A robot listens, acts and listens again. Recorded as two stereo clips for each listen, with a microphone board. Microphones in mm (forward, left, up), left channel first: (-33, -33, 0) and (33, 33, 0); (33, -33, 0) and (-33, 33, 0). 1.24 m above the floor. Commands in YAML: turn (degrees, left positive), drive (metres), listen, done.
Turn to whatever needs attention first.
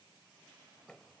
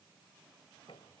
listen: true
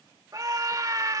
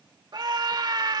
turn: 95
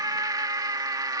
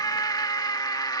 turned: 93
done: "Found it: a scream, straight ahead."